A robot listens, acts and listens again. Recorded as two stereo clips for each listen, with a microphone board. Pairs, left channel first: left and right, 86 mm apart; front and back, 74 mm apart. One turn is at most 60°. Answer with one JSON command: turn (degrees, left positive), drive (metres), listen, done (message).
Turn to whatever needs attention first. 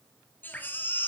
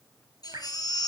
{"turn": 25}
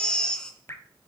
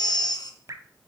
{"turn": 10}
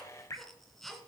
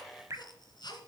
{"done": "Facing the baby crying."}